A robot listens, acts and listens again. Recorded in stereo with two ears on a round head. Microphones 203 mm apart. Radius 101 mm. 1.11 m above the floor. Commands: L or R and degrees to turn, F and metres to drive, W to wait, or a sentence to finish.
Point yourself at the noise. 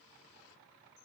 W
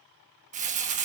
R35
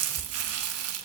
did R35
R110
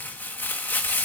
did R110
L10
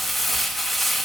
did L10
Found it: crumpling, straight ahead.